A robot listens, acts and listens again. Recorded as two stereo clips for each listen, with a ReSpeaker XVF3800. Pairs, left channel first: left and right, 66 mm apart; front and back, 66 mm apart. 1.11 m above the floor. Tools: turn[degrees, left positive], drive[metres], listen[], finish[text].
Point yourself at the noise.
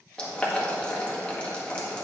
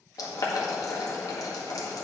Thought: The boiling: 15° left.
Action: turn[15]
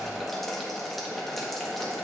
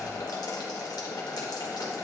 Action: finish[Found it: boiling, straight ahead.]